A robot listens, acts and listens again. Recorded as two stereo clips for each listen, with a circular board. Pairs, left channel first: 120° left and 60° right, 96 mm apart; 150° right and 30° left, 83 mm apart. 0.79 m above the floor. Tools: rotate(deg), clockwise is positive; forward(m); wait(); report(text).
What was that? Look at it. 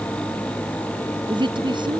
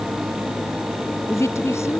rotate(95)
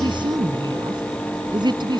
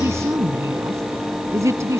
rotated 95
rotate(20)
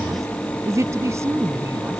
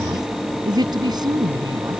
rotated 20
report("Found it: a woman speaking, straight ahead.")